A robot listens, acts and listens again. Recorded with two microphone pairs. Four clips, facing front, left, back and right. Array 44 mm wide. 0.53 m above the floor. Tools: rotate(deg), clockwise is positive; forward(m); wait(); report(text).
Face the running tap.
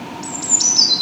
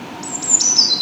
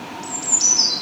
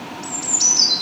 wait()
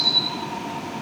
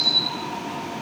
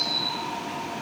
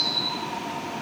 wait()
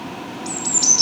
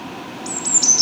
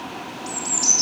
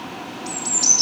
report("I can't make out a running tap, only a bird.")